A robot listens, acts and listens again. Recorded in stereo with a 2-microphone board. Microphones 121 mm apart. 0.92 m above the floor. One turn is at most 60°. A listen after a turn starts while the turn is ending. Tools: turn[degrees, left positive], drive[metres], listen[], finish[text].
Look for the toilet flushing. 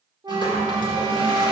Thought: The toilet flushing: about 35° left or 145° left.
Action: turn[35]
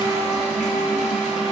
Thought: So it is at 110° left.
Action: turn[60]
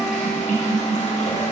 Thought: The toilet flushing is now 80° left.
Action: turn[60]
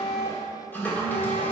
Thought: The toilet flushing is now 15° left.
Action: turn[15]
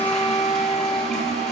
Action: finish[Facing the toilet flushing.]